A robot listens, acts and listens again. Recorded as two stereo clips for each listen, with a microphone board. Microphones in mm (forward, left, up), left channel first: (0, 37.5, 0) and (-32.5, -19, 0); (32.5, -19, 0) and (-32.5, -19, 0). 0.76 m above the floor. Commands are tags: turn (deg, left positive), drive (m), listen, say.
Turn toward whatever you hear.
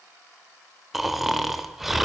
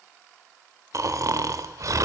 <turn deg="155"/>
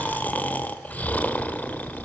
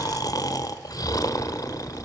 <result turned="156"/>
<say>Found it: snoring, straight ahead.</say>